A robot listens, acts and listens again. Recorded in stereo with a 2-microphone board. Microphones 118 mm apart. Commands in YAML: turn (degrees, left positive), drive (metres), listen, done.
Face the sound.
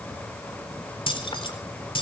turn: 50
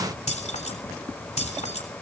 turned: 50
turn: 85
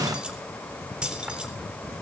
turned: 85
turn: -10
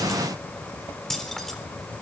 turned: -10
done: "Facing the keys jangling, 2 to 4 m away."